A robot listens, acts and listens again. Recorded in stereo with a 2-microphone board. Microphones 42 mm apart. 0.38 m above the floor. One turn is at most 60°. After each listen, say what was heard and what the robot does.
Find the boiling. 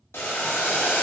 Turn 60° left.
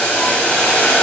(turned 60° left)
So it is at 35° left. Turn 35° left.
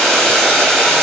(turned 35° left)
The boiling is now 10° left. Turn 10° left.
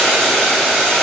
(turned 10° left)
Facing the boiling, under 1 m away.